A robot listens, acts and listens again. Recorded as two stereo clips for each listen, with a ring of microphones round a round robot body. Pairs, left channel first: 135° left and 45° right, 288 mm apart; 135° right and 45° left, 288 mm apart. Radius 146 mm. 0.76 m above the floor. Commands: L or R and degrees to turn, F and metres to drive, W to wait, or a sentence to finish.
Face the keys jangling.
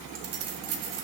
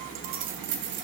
R10
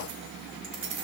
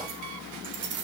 R10
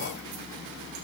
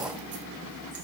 R10
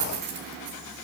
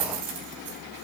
Found it: keys jangling, straight ahead.